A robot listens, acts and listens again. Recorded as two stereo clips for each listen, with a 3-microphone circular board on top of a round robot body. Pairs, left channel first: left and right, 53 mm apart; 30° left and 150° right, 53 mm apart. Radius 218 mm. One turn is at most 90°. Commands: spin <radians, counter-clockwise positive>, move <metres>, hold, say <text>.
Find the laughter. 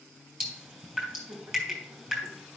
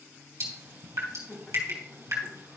spin -0.61
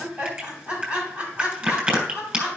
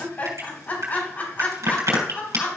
spin -0.35
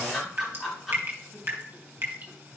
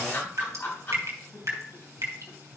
say Found it: laughter, straight ahead.